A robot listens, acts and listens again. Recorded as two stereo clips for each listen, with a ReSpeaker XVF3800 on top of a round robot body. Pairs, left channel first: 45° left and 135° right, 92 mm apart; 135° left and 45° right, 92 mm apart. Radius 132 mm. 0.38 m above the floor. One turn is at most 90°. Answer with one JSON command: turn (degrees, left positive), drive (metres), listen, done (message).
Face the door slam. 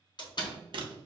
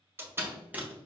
{"turn": 15}
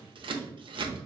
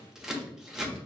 {"done": "Facing where the door slam came from. I can't hear it now."}